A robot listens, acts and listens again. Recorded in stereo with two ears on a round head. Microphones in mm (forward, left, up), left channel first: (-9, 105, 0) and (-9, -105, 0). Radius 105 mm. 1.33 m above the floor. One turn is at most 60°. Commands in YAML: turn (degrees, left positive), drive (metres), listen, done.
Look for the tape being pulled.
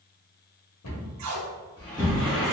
turn: -60
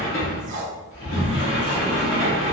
turn: -35
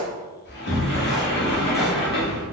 listen: true
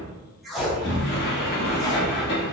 done: "Found it: tape being pulled, straight ahead."